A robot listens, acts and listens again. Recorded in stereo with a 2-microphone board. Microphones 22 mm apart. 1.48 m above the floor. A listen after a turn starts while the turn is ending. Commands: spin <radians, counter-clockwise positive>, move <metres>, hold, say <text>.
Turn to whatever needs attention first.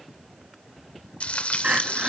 spin -1.57
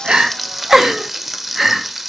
spin -0.17
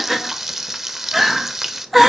say Found it: crying, straight ahead, 1 to 2 m away.